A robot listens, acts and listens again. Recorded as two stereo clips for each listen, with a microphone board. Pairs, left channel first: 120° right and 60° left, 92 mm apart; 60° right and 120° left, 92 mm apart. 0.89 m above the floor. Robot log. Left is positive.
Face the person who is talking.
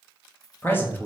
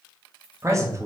note: The man speaking: 175° left.
cmd yaw +175
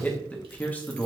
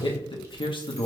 note: The man speaking is now 50° right.
cmd yaw -50
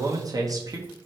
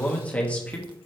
note: The man speaking is now 15° left.
cmd yaw +15
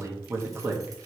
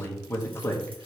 end: Found it: a man speaking, straight ahead, 1 to 2 m away.